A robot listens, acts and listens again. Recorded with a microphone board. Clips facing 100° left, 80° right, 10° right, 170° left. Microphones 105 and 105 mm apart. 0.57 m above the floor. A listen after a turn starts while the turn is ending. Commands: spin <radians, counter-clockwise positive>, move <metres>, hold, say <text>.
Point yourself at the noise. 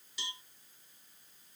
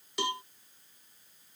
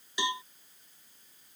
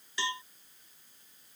spin -1.48
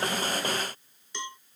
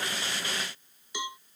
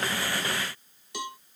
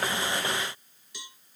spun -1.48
say Found it: a cowbell, straight ahead.